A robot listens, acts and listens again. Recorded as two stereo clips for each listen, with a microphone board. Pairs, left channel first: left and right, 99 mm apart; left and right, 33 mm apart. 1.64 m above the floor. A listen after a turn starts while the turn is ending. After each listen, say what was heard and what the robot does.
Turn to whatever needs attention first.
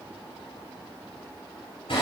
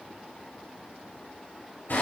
Keep listening.
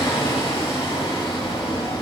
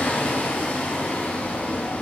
Keep listening.
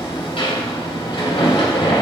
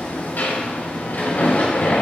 I can't make out anything urgent to turn to.